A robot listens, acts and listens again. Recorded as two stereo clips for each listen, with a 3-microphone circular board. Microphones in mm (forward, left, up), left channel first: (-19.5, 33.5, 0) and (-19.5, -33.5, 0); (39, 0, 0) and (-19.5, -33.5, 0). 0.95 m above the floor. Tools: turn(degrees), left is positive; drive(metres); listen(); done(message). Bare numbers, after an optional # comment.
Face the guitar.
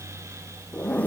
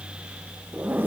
listen()
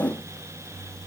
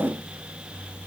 listen()
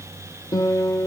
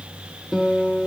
# The guitar: 115° left.
turn(115)
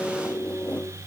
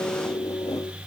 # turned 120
done("Facing the guitar, 2 to 4 m away.")